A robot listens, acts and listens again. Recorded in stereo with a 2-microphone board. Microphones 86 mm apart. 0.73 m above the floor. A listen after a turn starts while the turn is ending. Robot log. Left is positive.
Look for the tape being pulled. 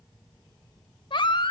cmd idle
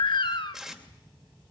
cmd yaw -30
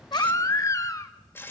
note: So it is at 30° left.
cmd yaw +30
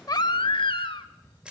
note: The tape being pulled is now 10° right.
cmd yaw -10
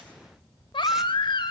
cmd idle
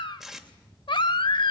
end: Found it: tape being pulled, straight ahead, 2 to 4 m away.